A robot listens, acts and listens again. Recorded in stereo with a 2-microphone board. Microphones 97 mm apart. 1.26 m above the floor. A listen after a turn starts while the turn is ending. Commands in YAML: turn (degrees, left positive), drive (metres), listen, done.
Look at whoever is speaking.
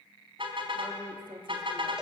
turn: -60
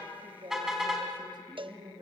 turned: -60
turn: -50
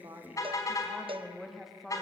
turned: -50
done: "Found it: a woman speaking, straight ahead, 2 to 4 m away."